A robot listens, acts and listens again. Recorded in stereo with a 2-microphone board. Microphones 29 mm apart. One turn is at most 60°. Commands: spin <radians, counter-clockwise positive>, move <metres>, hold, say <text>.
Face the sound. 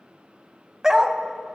spin -0.35
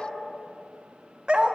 spin -1.05
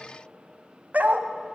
spin -1.05
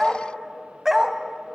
spin -0.26
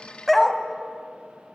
say Found it: a dog barking, straight ahead.